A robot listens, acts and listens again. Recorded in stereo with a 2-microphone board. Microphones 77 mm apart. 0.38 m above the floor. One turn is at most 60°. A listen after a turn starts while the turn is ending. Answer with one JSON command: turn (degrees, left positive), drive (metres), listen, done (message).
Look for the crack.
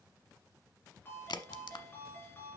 {"turn": 60}
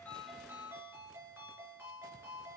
{"turn": 30}
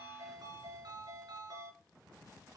{"done": "Facing where the crack came from. I can't hear it now."}